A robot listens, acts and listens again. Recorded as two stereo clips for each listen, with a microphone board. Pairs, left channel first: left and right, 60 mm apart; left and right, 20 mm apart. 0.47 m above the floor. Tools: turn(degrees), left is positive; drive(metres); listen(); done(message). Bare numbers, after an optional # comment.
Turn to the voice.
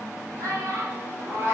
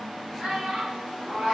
# The child speaking: about 60° right or 120° right.
turn(-60)
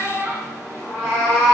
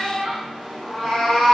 # So it is at 30° right.
turn(-30)
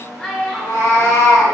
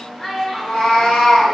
done("Facing the child speaking, under 1 m away.")